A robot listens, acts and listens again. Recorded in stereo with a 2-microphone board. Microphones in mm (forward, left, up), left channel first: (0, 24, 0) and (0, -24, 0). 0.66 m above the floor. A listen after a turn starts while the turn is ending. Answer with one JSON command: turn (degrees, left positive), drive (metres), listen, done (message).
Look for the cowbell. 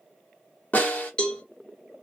{"turn": 25}
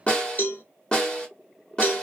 {"turn": 130}
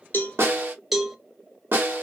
{"turn": -10}
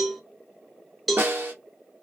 {"done": "Found it: a cowbell, straight ahead."}